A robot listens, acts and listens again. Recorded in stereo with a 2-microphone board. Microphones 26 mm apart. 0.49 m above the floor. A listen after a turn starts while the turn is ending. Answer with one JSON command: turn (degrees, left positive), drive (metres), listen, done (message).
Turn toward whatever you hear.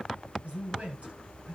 {"turn": -75}
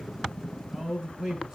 {"turn": -20}
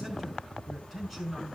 {"done": "Found it: a man speaking, straight ahead, over 4 m away."}